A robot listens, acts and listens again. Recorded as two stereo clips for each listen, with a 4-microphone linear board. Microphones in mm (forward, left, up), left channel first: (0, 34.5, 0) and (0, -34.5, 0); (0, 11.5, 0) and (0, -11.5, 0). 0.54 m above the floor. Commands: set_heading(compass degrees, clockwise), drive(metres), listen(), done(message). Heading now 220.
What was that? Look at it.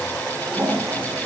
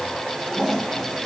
set_heading(235)
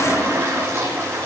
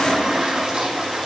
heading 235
set_heading(20)
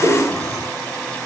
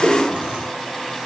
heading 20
set_heading(75)
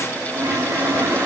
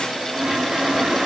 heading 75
set_heading(110)
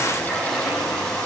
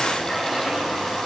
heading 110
done("Found it: a toilet flushing, straight ahead.")